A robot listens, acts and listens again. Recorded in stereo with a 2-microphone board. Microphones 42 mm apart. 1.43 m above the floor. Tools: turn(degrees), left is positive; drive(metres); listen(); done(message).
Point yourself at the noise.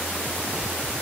listen()
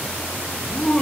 turn(degrees=25)
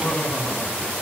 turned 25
turn(degrees=130)
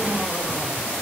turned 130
listen()
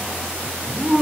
turn(degrees=-20)
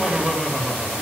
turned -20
turn(degrees=-10)
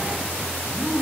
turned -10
done("Found it: laughter, straight ahead.")